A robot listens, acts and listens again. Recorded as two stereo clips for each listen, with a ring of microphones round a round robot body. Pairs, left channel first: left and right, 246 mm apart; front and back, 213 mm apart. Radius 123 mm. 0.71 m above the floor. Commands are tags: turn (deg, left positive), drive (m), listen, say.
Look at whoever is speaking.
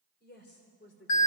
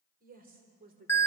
<turn deg="135"/>
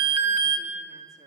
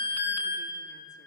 <listen/>
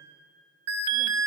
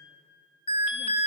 <listen/>
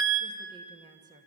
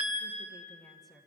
<turn deg="-100"/>
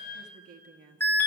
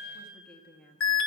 <turn deg="-80"/>
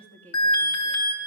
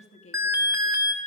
<turn deg="15"/>
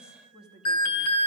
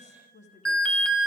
<say>Found it: a woman speaking, straight ahead, 1 to 2 m away.</say>